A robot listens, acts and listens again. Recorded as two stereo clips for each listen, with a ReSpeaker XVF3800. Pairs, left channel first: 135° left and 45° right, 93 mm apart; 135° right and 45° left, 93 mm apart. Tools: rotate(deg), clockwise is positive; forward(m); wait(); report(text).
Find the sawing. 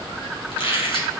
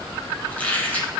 wait()
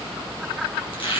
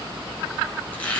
wait()
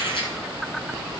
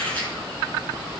report("I can't make out sawing to turn to.")